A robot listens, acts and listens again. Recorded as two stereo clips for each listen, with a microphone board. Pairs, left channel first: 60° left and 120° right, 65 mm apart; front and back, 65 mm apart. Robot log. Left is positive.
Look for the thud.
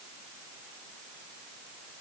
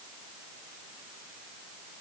cmd idle
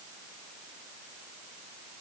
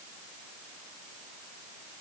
cmd idle
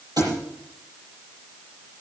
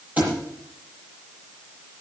note: The thud: 115° right.
cmd yaw -115
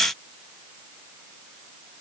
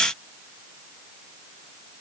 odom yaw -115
end: I heard a thud from this way, but can't make it out now.